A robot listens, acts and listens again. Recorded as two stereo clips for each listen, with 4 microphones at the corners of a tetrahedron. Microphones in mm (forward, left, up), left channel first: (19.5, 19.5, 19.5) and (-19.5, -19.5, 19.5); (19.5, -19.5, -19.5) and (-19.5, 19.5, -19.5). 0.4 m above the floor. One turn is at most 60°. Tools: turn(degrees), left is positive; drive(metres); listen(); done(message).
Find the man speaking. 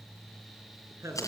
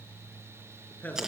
turn(degrees=-60)
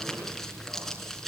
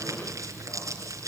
turn(degrees=-45)
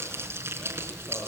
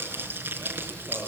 listen()
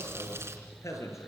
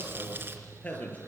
turn(degrees=15)
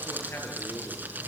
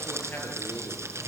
listen()
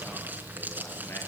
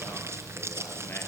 listen()
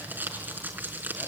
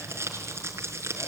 done("Facing where the man speaking came from. I can't hear it now.")